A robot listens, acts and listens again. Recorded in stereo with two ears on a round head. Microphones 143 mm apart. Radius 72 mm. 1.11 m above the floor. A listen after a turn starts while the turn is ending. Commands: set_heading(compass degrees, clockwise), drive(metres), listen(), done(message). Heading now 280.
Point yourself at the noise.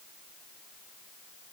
listen()
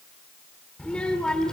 set_heading(250)
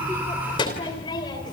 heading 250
set_heading(100)
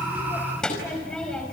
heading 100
done("Facing the child speaking.")